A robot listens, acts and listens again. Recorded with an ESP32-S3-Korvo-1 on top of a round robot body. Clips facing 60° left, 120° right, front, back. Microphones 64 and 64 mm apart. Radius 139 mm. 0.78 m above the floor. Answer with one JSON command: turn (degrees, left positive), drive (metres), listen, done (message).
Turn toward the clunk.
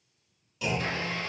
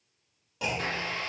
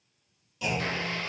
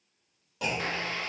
{"turn": -155}
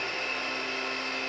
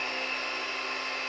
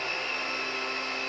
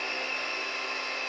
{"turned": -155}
{"done": "I heard a clunk from this way, but can't make it out now."}